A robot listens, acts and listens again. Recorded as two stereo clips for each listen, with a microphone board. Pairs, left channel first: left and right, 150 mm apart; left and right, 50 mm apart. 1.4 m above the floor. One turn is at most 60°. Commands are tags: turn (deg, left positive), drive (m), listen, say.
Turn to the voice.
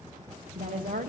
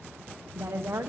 <turn deg="-60"/>
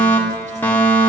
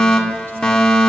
<listen/>
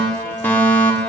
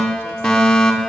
<listen/>
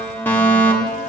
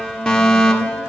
<say>I heard a woman speaking, but can't make it out now. It was about 5° right or 55° right.</say>